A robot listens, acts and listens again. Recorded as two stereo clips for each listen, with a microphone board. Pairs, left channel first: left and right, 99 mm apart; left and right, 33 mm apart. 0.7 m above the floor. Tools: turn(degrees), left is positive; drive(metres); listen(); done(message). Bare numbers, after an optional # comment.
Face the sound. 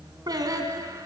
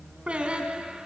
# The singing: about 35° right or 145° right.
turn(-35)
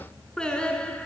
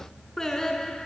# So it is at 15° left.
turn(15)
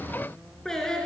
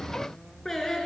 # The singing is now 10° left.
turn(10)
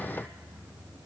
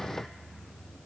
listen()
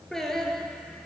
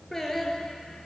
done("Found it: singing, straight ahead.")